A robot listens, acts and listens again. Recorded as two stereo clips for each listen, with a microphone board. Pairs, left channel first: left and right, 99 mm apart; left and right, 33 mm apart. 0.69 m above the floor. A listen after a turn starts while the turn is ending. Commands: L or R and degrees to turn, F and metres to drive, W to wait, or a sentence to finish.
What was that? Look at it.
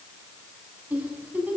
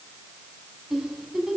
R15
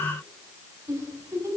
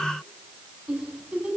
R150
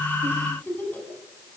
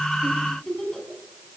L20
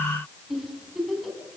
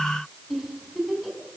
Found it: a giggle, straight ahead.